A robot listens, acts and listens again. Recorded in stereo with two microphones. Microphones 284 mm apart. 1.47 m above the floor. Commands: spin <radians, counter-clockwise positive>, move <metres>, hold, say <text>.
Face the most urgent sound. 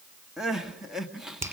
spin 0.52
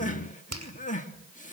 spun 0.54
spin 2.62
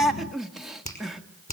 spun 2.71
say Found it: crying, straight ahead.